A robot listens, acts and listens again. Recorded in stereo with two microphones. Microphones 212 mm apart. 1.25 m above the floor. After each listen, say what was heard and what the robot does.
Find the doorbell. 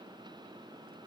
Keep listening.
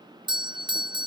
The doorbell: about 20° right or 160° right. Turn 20° right.
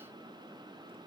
Keep listening.
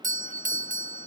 So it is at 135° right. Turn 135° right.
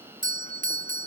The doorbell is now 50° right. Turn 50° right.
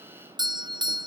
The doorbell is now 25° right. Turn 25° right.
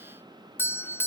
The doorbell is now 10° left. Turn 10° left.
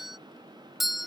Facing the doorbell.